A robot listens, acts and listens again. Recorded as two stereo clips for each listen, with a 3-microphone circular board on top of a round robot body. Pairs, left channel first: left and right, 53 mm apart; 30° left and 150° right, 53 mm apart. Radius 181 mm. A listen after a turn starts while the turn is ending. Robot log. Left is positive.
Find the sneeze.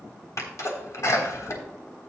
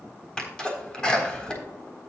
note: The sneeze: 100° left.
cmd yaw +100
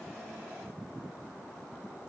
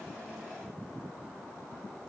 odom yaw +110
note: Nothing new. It was at 10° right.
cmd yaw -10
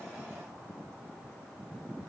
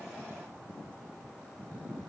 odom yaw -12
end: I heard a sneeze from this way, but can't make it out now.